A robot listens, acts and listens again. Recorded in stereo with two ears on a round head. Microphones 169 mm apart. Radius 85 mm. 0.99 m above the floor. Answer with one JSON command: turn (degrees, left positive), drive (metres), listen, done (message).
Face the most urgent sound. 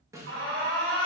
{"turn": -90}
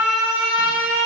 {"done": "Found it: an alarm, straight ahead."}